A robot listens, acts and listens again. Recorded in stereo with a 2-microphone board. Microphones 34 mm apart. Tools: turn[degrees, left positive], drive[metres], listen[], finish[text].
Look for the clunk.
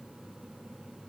Action: listen[]
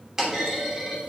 Action: turn[-30]
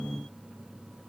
Action: listen[]
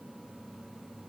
Action: finish[I heard a clunk, but can't make it out now. It was about 15° left or 135° right.]